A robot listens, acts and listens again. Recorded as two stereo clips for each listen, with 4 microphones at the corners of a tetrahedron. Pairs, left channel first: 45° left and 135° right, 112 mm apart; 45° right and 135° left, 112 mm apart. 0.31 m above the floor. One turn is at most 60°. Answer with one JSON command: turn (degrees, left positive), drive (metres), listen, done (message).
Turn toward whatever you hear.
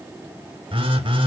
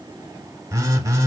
{"turn": -60}
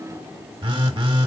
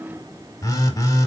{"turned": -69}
{"turn": -60}
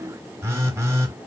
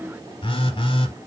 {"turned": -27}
{"turn": -60}
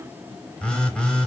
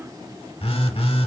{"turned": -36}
{"turn": -35}
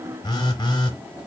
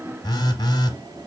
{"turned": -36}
{"done": "Found it: a phone buzzing, straight ahead, under 1 m away."}